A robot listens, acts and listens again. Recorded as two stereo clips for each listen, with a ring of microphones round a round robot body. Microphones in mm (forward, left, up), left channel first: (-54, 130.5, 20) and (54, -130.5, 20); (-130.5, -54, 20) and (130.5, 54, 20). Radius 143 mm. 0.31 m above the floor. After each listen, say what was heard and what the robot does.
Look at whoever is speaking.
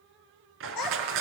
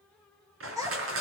The child speaking: 100° left. Turn 100° left.
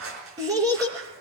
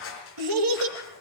The child speaking is now 10° left. Turn 10° left.
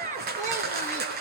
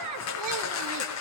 Facing the child speaking.